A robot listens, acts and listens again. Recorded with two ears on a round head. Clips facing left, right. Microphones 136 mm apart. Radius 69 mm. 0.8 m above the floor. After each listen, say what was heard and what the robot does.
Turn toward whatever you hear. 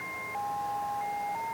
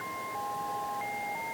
Keep listening.
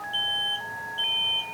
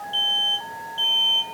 The alarm: about 40° right or 140° right. Turn 40° right.
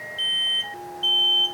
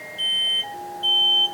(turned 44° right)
Found it: an alarm, straight ahead.